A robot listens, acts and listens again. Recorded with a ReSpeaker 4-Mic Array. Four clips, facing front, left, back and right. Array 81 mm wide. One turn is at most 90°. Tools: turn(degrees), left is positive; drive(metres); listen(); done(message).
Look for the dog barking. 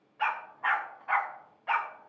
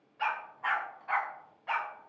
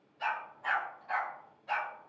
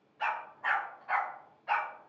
turn(degrees=10)
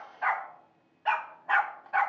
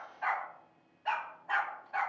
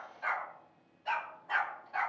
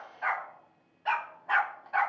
turn(degrees=-25)
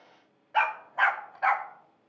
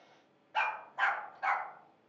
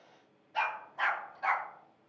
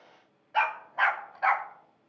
turn(degrees=-35)
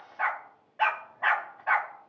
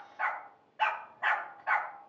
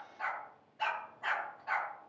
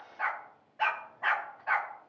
done("Found it: a dog barking, straight ahead.")